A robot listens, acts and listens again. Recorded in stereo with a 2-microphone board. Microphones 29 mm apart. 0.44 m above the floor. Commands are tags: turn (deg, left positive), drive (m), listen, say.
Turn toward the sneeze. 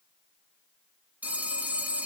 <listen/>
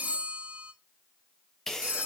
<turn deg="15"/>
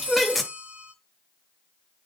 <say>Found it: a sneeze, straight ahead.</say>